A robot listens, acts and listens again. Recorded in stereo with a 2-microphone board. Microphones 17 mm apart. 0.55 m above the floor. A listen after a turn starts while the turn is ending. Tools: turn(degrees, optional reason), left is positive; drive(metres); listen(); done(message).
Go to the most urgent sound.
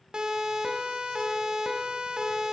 turn(degrees=-50, reason="The siren: about 50° right or 130° right.")
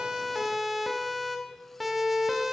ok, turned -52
drive(metres=1.0)
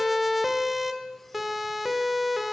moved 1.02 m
drive(metres=1.0)
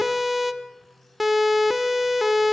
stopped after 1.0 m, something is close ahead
done("I am next to the siren.")